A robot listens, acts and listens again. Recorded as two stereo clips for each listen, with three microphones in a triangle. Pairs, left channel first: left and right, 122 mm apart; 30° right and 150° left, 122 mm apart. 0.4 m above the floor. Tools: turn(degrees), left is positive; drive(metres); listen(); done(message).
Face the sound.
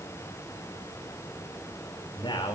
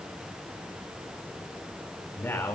turn(degrees=40)
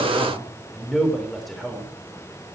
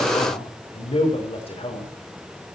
done("Found it: a man speaking, straight ahead.")